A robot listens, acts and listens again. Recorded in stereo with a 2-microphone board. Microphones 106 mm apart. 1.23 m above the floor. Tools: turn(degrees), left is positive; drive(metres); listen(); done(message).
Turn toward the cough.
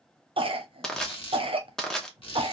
turn(degrees=-60)
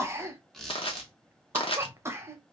turn(degrees=-30)
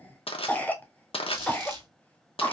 turn(degrees=15)
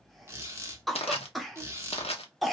done("Found it: a cough, straight ahead.")